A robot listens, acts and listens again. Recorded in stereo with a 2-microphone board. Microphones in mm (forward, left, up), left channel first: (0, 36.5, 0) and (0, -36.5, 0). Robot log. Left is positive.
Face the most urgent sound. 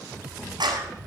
cmd idle
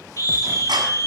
note: The scream: about 50° left or 130° left.
cmd yaw +50
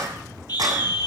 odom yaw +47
note: So it is at 80° left.
cmd yaw +80
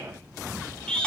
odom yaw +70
note: The scream is now 10° left.
cmd yaw +10
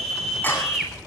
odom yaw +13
end: Found it: a scream, straight ahead.